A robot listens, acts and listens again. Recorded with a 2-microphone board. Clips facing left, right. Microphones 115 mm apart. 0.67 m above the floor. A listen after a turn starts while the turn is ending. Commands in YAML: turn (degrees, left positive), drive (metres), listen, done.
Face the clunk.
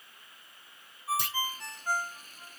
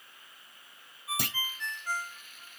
turn: -65
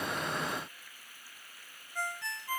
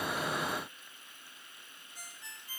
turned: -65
listen: true
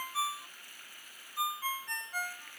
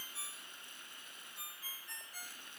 done: "I heard a clunk, but can't make it out now. It was about straight ahead or 50° right."